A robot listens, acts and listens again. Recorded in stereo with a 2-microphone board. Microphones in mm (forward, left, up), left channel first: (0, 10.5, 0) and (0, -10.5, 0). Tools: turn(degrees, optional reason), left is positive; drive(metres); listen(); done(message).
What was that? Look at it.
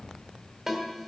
turn(degrees=-30)
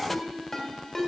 turn(degrees=20, reason="So it is at 20° left.")
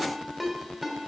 done("Facing the ringtone.")